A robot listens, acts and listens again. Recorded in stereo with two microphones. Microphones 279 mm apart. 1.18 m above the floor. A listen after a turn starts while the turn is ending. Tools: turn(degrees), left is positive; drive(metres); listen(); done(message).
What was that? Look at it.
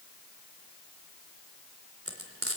turn(degrees=-50)
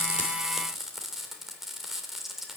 done("Found it: frying, straight ahead.")